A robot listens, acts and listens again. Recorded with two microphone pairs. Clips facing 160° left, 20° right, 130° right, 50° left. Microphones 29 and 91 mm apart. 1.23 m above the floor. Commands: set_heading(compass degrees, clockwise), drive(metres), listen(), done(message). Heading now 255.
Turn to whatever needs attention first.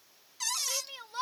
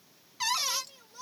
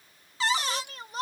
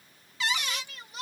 set_heading(70)
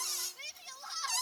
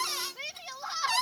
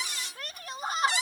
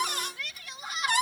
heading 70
set_heading(150)
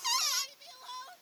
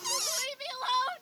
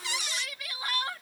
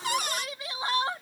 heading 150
set_heading(160)
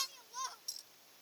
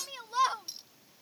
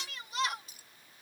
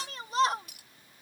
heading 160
done("Found it: a shout, straight ahead.")